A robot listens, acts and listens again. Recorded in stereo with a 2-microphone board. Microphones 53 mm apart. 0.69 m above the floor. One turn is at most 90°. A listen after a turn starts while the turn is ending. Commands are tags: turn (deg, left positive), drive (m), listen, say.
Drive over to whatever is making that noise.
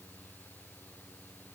<listen/>
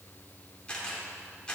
<turn deg="20"/>
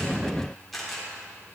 <drive m="1.0"/>
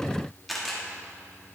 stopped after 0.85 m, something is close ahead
<say>Arrived at the camera shutter, straight ahead.</say>